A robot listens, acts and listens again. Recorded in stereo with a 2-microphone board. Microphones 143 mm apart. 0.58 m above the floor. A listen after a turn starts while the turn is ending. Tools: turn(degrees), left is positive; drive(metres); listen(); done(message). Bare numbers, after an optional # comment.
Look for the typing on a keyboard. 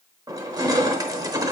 listen()
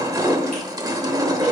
listen()
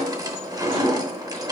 done("I can't make out typing on a keyboard to turn to.")